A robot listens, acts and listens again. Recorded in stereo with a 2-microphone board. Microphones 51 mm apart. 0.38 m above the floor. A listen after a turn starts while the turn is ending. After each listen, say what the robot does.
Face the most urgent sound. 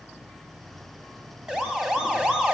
Turn 30° right.
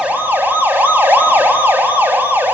Turn 140° right.
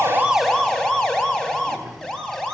Turn 10° left.
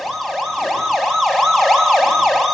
Facing the siren, 2 to 4 m away.